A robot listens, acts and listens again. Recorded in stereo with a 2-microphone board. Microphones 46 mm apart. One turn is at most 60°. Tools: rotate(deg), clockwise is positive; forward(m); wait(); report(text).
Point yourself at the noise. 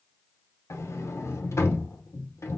rotate(-60)
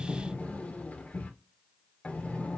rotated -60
rotate(-30)
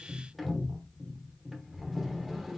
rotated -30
report("Facing the sliding door, under 1 m away.")